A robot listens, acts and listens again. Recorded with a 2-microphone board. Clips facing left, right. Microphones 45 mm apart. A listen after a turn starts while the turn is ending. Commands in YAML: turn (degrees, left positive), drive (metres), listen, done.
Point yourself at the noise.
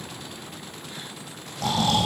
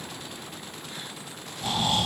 turn: 90
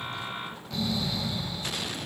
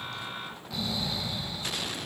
done: "Facing the snoring, over 4 m away."